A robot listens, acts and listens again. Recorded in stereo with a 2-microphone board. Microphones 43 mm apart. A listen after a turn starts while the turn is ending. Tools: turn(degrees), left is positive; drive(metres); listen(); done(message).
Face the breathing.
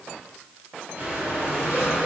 turn(degrees=-50)
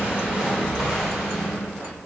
turn(degrees=-10)
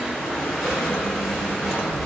done("Found it: breathing, straight ahead, 2 to 4 m away.")